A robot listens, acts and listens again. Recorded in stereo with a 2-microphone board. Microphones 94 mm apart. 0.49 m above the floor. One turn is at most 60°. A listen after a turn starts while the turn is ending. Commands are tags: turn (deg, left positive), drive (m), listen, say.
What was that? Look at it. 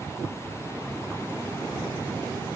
<listen/>
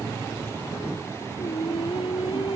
<turn deg="60"/>
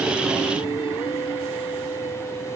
<turn deg="60"/>
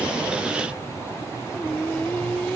<turn deg="10"/>
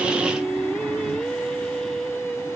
<say>Facing the singing.</say>